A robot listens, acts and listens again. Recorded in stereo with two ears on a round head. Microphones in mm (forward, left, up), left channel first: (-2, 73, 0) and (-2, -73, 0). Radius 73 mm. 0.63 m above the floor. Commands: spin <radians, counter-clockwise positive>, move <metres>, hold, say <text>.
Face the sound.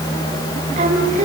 spin -0.79
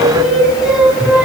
say Facing the singing, over 4 m away.